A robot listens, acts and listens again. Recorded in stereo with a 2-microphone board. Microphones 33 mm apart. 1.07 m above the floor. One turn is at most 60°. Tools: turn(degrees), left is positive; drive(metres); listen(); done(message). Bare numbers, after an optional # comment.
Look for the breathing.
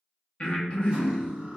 # The breathing: about 30° left or 150° left.
turn(30)
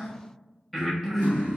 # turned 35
done("Found it: breathing, straight ahead, under 1 m away.")